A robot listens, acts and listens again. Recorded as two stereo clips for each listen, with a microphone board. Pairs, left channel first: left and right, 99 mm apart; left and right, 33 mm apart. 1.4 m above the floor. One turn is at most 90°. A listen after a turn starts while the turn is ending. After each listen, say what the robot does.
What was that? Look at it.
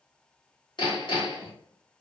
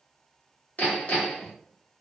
Turn 50° left.
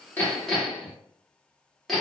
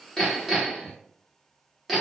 Found it: hammering, straight ahead.